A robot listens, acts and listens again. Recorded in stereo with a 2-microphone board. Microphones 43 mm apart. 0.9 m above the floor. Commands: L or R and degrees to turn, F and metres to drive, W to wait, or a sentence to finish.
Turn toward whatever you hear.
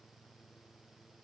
W
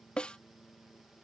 L20
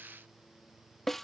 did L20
Facing the snare drum.